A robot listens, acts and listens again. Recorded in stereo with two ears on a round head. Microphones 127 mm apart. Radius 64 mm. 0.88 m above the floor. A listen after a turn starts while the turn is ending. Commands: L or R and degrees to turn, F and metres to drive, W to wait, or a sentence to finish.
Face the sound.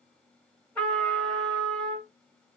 L30
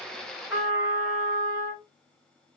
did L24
R15
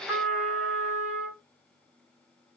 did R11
Facing the trumpet, 2 to 4 m away.